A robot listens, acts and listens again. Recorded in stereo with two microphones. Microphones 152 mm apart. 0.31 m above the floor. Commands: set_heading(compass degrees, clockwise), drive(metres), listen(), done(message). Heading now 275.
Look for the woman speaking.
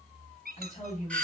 set_heading(220)
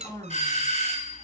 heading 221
set_heading(196)
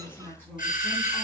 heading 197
set_heading(182)
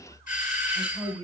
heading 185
set_heading(170)
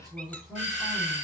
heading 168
done("Facing the woman speaking.")